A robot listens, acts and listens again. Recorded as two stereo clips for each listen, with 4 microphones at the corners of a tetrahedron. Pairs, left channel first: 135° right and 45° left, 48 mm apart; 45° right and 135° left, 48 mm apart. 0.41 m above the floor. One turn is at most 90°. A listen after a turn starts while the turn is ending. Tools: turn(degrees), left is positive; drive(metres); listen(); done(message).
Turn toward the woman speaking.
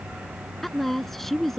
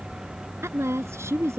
turn(degrees=90)
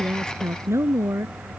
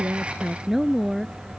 turn(degrees=50)
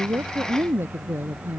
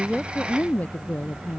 turn(degrees=10)
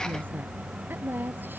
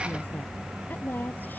done("Facing the woman speaking.")